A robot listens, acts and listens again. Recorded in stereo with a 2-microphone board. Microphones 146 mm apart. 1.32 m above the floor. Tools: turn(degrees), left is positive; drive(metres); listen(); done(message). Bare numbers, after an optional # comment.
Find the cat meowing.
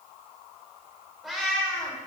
turn(30)
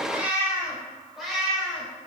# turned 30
turn(30)
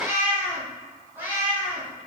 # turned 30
# So it is at 15° right.
turn(-15)
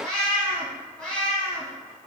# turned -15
done("Found it: a cat meowing, straight ahead, 2 to 4 m away.")